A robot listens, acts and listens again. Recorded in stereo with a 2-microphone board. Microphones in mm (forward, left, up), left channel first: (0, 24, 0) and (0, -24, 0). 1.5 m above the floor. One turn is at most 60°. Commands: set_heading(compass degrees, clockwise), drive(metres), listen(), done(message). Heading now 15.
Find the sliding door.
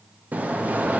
set_heading(45)
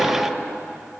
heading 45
done("Found it: a sliding door, straight ahead.")